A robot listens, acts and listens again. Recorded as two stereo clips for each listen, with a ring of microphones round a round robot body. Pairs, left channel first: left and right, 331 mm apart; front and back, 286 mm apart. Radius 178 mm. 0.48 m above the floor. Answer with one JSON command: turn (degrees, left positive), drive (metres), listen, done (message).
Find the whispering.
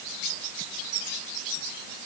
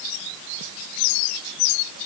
{"listen": true}
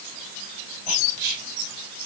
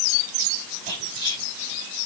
{"turn": -75}
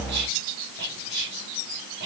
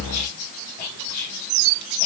{"turn": -35}
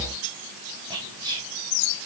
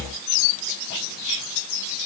{"turn": -15}
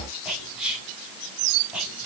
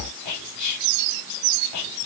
{"done": "Facing the whispering."}